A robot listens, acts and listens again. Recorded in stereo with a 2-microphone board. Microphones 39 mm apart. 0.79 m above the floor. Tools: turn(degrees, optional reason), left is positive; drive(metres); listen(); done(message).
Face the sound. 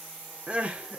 turn(degrees=-35, reason="The crying: about 35° right or 145° right.")
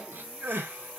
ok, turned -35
turn(degrees=-110, reason="So it is at 110° right.")
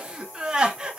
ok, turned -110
turn(degrees=-20, reason="The crying is now 20° right.")
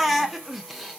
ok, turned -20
done("Found it: crying, straight ahead, 1 to 2 m away.")